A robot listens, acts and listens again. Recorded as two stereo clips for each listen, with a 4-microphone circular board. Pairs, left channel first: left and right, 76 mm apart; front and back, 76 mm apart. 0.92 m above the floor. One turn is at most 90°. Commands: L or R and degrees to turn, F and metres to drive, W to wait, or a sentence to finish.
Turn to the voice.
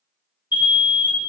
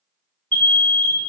W
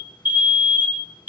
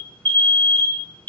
W
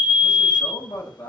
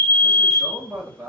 L90
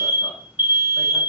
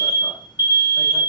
L20
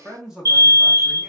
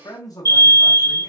Facing the man speaking, 1 to 2 m away.